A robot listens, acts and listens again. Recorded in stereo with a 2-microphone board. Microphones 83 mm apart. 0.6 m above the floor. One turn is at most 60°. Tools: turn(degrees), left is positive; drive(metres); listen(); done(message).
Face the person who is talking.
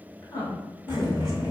turn(degrees=45)
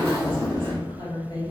turn(degrees=60)
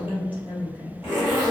turn(degrees=20)
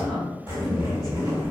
done("Found it: a woman speaking, straight ahead, 1 to 2 m away.")